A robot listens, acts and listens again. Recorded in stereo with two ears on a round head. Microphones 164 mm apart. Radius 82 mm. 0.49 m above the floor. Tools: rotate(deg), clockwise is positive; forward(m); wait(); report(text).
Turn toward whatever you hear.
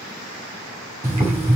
rotate(30)
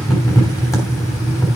rotate(-15)
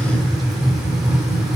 report("Found it: boiling, straight ahead.")